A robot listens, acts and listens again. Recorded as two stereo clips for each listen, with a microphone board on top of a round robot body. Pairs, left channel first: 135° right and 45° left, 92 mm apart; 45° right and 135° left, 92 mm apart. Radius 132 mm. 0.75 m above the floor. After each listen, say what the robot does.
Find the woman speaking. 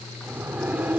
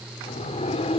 Keep listening.
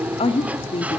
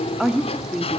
Turn 140° right.
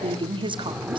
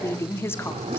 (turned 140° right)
Turn 20° left.
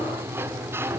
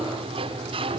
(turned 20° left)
Keep listening.
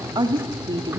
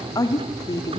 Found it: a woman speaking, straight ahead.